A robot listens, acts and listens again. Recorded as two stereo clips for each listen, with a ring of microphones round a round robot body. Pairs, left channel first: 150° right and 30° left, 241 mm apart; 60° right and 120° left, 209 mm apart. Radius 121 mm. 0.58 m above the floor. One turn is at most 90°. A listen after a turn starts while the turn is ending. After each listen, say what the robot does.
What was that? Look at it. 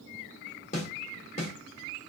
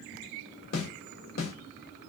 Turn 90° right.
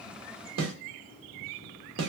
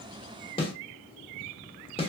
Found it: a snare drum, straight ahead.